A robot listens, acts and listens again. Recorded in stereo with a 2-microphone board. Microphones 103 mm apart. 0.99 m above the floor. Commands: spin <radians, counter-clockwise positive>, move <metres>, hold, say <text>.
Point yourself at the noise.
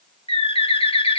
spin 1.22
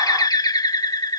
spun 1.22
spin 0.70
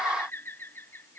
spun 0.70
hold
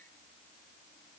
hold
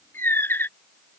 spin 0.44
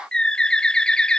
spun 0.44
spin 0.17
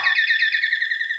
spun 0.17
say Facing the bird.